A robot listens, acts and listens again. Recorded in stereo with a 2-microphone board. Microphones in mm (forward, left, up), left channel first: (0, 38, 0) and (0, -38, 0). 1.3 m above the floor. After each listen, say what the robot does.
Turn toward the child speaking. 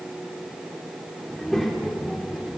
Turn 30° right.
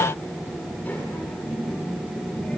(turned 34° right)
Turn 20° left.
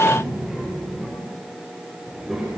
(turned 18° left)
Found it: a child speaking, straight ahead, over 4 m away.